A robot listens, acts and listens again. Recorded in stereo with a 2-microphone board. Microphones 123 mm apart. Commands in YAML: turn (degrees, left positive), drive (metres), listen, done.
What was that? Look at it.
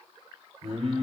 turn: -75
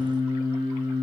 turn: -40
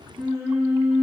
turn: -15
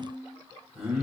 done: "Found it: singing, straight ahead, over 4 m away."